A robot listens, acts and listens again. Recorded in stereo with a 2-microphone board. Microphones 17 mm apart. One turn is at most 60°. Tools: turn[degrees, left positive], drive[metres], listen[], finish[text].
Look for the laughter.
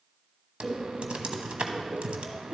Thought: The laughter: about 20° right or 160° right.
Action: turn[-20]
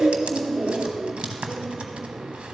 Thought: So it is at 135° right.
Action: turn[-60]
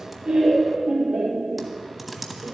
Thought: The laughter is now 50° right.
Action: turn[-50]
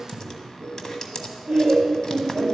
Thought: The laughter is now 10° right.
Action: turn[-10]
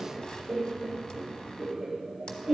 Action: finish[Facing the laughter.]